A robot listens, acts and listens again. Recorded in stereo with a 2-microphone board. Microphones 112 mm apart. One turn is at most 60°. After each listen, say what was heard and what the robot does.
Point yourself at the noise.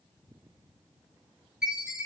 Turn 30° right.
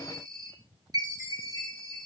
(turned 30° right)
So it is at 145° right. Turn 60° right.
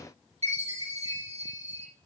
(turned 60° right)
The chime is now 80° right. Turn 60° right.
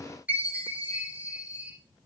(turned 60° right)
The chime is now 15° right. Turn 15° right.
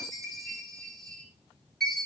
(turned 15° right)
Facing the chime, over 4 m away.